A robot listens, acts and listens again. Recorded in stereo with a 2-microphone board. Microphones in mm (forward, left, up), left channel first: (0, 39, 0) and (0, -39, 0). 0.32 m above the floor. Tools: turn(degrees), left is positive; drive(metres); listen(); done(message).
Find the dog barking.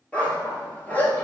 turn(degrees=20)
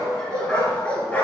turn(degrees=20)
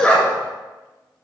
turn(degrees=15)
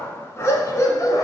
turn(degrees=50)
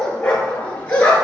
turn(degrees=15)
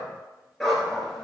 done("Facing the dog barking.")